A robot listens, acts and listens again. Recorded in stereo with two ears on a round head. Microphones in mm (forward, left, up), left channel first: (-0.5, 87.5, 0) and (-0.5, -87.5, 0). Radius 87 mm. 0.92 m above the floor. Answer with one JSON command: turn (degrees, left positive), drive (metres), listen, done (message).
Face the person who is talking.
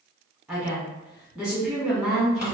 {"turn": -30}
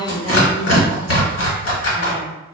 {"turn": -145}
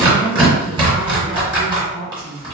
{"turn": -10}
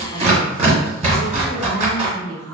{"done": "Facing the woman speaking."}